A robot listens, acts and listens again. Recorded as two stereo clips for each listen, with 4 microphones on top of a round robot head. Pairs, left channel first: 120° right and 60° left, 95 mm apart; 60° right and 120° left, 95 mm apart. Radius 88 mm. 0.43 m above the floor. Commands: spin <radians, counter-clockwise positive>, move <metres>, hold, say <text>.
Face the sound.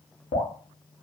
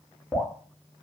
spin -2.36
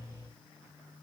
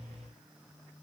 hold
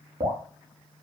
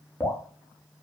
spin 0.44
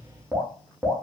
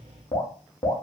spin -0.17
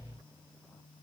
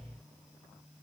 hold
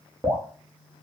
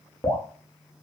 say Found it: dripping, straight ahead.